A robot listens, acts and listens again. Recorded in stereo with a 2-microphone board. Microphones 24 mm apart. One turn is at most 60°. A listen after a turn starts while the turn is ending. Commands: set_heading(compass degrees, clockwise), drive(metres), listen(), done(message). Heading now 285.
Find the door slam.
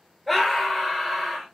listen()
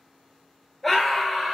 listen()
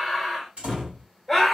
set_heading(345)
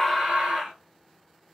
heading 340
listen()
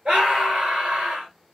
done("I heard a door slam, but can't make it out now. It was about 5° right or 65° right.")